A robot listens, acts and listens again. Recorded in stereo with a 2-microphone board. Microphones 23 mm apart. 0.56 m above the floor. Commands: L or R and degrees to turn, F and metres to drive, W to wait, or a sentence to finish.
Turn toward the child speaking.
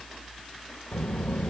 L70
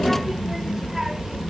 R30
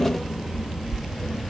R25
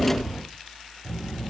R20
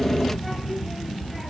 Found it: a child speaking, straight ahead.